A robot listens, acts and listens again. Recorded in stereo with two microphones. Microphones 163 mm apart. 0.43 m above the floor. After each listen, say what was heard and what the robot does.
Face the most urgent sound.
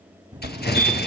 The fire alarm: about 45° right or 135° right. Turn 45° right.
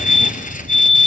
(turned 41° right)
So it is at 80° right. Turn 80° right.
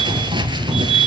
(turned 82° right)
Facing the fire alarm, 2 to 4 m away.